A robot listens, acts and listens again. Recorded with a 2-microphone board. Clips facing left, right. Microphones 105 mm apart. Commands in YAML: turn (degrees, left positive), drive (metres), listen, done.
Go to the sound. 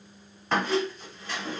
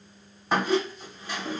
turn: -30
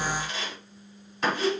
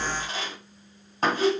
turn: -140
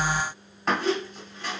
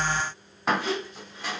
turn: -10
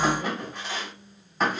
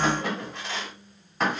drive: 1.0
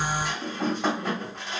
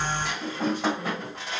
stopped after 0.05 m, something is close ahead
done: "Something is in my way. I am facing the squeak but have not reached it."